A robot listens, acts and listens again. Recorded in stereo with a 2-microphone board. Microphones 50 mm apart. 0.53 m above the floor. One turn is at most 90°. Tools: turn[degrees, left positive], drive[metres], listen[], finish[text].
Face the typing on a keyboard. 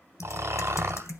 Action: turn[90]
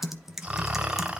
Action: finish[Facing the typing on a keyboard.]